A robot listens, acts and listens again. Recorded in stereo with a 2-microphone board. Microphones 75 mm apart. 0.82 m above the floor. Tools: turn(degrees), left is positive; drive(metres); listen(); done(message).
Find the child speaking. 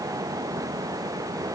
listen()
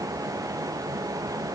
listen()
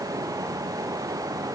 done("I can't make out a child speaking.")